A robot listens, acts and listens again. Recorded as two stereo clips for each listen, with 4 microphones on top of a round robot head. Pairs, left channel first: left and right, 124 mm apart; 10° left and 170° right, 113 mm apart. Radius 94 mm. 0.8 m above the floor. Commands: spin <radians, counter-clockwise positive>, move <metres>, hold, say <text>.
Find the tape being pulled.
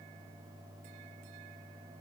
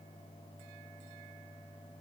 hold
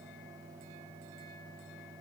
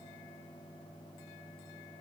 hold
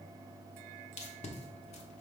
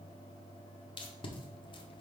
spin 0.96
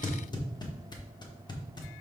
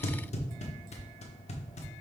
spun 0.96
spin 0.61
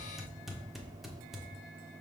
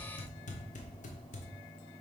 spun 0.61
say Facing the tape being pulled, 1 to 2 m away.